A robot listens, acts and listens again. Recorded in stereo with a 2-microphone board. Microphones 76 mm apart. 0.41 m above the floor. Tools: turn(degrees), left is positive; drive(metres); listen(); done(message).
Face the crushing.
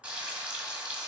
listen()
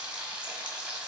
listen()
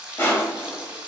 turn(degrees=30)
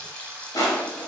turn(degrees=115)
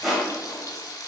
done("Found it: crushing, straight ahead.")